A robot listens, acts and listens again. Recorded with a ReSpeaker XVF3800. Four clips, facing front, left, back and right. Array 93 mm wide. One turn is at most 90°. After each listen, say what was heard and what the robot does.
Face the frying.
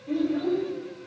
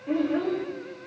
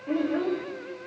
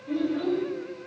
Keep listening.
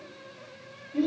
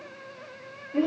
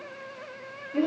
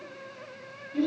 Keep listening.
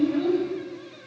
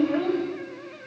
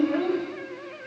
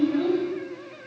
I can't make out frying to turn to.